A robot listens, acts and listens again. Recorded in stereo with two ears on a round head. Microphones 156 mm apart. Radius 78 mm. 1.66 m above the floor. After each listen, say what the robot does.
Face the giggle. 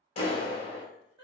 Turn 35° right.
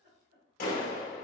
Turn 105° right.
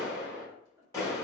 Keep listening.
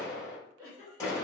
Turn 25° right.
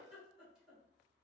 Found it: a giggle, straight ahead.